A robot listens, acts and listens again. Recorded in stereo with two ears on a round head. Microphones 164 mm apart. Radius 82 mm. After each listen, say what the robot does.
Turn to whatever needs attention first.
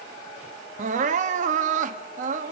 Turn 45° right.
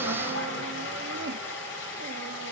Keep listening.
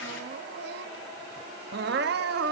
Turn 85° right.
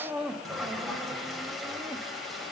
Facing the crying, under 1 m away.